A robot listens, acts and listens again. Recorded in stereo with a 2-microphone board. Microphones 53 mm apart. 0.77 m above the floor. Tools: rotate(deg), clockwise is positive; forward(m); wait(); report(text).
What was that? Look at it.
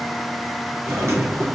rotate(60)
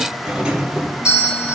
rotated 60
rotate(20)
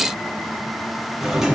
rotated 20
rotate(10)
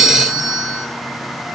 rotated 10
report("Found it: a doorbell, straight ahead, 1 to 2 m away.")